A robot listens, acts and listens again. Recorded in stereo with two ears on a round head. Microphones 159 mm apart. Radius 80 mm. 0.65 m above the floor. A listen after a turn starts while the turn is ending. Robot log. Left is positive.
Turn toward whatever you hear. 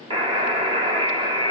note: The buzzer: about 30° right or 150° right.
cmd yaw -30
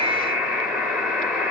note: So it is at 10° right.
cmd yaw -10
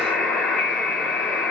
end: Facing the buzzer.